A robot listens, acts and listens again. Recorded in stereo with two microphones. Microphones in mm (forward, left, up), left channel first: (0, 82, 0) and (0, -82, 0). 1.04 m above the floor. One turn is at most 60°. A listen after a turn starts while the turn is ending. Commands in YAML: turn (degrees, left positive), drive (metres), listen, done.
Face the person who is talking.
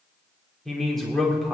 turn: 30
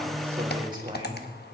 turn: -30
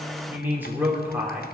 turn: -10
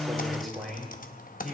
done: "Facing the man speaking, 2 to 4 m away."